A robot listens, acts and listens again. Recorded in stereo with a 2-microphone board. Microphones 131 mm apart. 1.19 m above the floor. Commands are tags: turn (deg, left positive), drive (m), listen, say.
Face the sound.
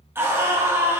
<turn deg="-20"/>
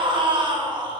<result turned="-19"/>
<turn deg="-145"/>
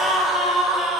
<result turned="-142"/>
<say>Facing the scream.</say>